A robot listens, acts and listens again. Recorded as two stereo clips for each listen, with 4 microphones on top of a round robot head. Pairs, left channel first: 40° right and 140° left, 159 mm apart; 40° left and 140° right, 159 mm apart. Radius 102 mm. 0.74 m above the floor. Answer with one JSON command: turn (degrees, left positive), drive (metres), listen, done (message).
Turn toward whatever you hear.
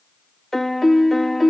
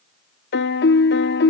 {"turn": 50}
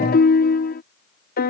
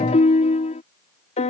{"turn": -10}
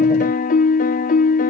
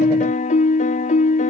{"done": "Facing the piano."}